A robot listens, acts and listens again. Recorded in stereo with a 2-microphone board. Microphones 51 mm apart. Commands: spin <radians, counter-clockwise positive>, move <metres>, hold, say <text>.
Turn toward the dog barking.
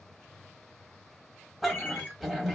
spin 0.52
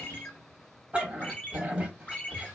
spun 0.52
spin -0.52
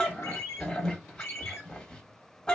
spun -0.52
spin 0.35
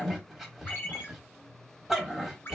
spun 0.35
say Found it: a dog barking, straight ahead.